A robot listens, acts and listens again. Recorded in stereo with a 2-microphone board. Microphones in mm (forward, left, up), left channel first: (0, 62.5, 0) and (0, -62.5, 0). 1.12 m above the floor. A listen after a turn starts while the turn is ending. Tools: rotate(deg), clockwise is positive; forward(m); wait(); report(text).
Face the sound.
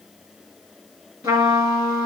rotate(35)
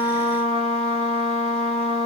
rotate(110)
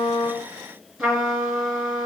report("Facing the trumpet.")